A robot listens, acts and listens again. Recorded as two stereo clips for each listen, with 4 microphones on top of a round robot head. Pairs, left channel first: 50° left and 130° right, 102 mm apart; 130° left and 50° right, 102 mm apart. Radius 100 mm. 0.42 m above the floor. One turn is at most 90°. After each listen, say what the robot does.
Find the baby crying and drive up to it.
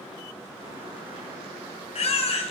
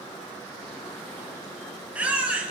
Turn 25° left.
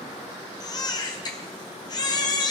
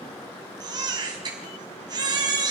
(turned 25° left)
Drive 1.0 m forward.
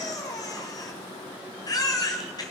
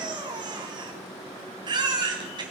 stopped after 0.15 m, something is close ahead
Blocked. The baby crying is further on, straight ahead.